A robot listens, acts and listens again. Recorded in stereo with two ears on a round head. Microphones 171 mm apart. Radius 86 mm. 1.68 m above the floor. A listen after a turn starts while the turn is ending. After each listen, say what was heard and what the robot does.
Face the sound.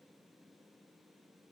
Keep listening.
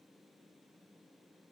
Keep listening.
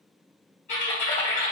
The typing on a keyboard: about 45° left or 135° left. Turn 45° left.
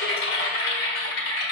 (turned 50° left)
So it is at 80° left. Turn 80° left.
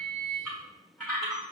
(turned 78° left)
Found it: typing on a keyboard, straight ahead.